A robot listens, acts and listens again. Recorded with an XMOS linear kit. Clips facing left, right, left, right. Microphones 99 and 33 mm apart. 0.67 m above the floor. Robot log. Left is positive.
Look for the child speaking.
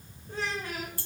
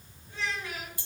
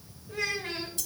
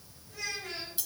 note: The child speaking: about 40° left or 140° left.
cmd yaw +40
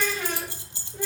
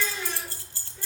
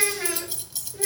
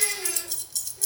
note: So it is at 115° left.
cmd yaw +115
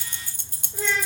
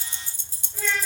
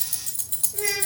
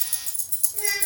note: The child speaking is now 25° left.
cmd yaw +25
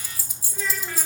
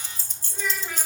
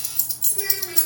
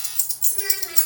note: The child speaking is now 10° right.
cmd yaw -10
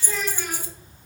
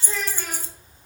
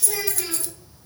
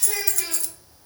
end: Facing the child speaking, 2 to 4 m away.